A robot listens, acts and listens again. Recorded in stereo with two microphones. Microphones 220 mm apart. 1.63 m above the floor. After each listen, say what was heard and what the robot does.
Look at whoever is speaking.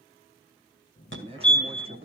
The man speaking: about 25° right or 155° right. Turn 25° right.
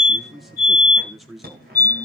Facing the man speaking, 1 to 2 m away.